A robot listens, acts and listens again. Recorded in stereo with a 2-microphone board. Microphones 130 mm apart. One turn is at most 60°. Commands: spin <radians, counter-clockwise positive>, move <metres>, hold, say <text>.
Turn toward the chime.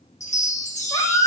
spin 1.05
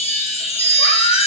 spin 0.87
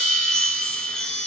say Found it: a chime, straight ahead, 1 to 2 m away.